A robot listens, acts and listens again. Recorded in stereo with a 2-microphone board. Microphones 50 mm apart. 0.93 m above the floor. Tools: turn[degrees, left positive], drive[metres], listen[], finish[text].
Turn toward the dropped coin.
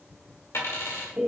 Thought: The dropped coin: about 70° left or 110° left.
Action: turn[70]
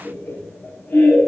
Action: listen[]
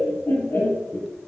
Action: finish[I heard a dropped coin, but can't make it out now. It was about straight ahead or 40° left.]